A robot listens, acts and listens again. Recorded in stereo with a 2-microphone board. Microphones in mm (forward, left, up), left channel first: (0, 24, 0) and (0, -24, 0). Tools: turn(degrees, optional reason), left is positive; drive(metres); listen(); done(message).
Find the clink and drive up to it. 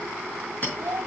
turn(degrees=35, reason="The clink: about 35° left or 145° left.")
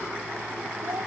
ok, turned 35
listen()
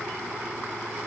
listen()
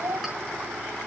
done("I heard a clink, but can't make it out now. It was about straight ahead or 110° left. I did not reach it.")